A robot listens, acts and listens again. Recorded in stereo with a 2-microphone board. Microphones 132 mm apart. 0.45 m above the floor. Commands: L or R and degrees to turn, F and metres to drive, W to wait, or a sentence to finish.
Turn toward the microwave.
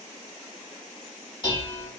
W
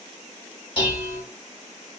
W
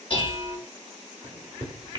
R35
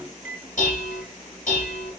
R10
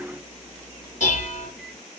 Facing the microwave.